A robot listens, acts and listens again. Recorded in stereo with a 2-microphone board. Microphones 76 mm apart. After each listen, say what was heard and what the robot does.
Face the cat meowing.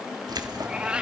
Turn 30° right.
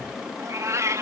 So it is at 135° right. Turn 135° right.
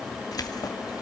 Keep listening.
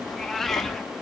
Facing the cat meowing, 1 to 2 m away.